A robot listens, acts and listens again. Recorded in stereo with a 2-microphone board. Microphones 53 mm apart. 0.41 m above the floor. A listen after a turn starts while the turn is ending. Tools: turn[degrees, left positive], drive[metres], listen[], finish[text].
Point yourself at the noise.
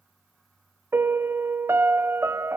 Thought: The piano: about 50° right or 130° right.
Action: turn[-50]
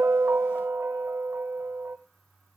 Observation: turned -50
Thought: So it is at 60° right.
Action: turn[-60]
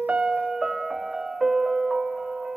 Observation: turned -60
Action: finish[Found it: a piano, straight ahead.]